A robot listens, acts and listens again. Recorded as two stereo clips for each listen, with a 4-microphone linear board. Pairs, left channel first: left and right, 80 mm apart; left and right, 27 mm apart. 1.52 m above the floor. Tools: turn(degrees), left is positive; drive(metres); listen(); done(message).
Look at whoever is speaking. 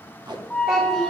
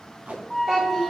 turn(degrees=-30)
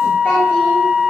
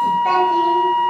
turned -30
listen()
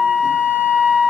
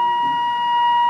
listen()
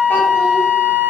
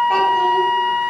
done("I heard a child speaking, but can't make it out now. It was about 25° left or 145° right.")